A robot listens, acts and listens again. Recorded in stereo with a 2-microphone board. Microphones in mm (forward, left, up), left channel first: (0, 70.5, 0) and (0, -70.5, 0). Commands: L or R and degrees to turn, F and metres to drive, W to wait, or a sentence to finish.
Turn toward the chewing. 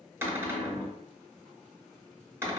W
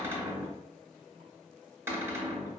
W
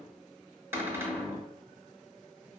I can't make out chewing, only a cupboard door.